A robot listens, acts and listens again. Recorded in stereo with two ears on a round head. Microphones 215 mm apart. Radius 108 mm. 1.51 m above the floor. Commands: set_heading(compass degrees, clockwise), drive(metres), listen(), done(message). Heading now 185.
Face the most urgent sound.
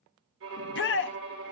set_heading(135)
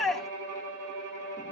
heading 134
done("Facing the shout.")